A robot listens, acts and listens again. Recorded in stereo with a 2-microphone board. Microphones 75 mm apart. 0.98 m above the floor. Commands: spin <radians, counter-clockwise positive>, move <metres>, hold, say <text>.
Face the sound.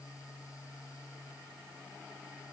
hold
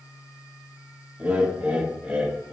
spin -0.35
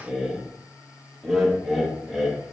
say Found it: laughter, straight ahead, under 1 m away.